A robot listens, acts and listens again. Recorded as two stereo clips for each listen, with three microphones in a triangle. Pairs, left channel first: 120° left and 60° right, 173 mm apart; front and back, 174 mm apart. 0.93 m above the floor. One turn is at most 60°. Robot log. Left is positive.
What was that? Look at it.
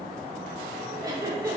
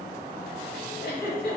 note: The giggle: 10° left.
cmd yaw +10
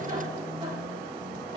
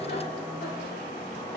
cmd idle
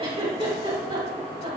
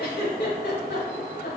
end: Found it: a giggle, straight ahead, 2 to 4 m away.